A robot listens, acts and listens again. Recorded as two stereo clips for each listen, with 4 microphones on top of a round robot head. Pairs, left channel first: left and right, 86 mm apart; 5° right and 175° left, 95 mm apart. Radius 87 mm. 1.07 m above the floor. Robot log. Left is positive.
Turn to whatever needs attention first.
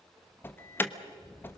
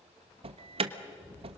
note: The alarm: 155° left.
cmd yaw +155
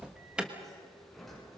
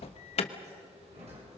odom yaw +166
note: The alarm is now 10° right.
cmd yaw -10
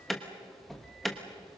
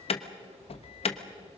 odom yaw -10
end: Facing the alarm, 1 to 2 m away.